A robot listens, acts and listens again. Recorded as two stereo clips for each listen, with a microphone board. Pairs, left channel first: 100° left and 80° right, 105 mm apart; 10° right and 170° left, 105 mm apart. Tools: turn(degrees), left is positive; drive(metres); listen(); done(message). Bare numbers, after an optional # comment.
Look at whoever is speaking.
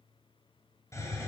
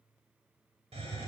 listen()
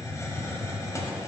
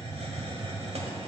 listen()
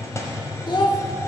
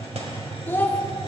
# The child speaking: 55° left.
turn(55)
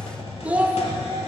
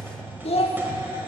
done("Facing the child speaking.")